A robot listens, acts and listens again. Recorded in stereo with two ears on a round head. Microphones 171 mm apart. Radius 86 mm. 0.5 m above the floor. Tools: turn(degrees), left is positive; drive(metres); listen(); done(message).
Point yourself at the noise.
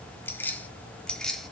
turn(degrees=30)
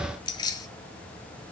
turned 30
turn(degrees=160)
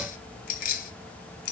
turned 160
turn(degrees=50)
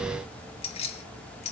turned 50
turn(degrees=35)
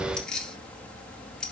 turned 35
done("Found it: keys jangling, straight ahead, 2 to 4 m away.")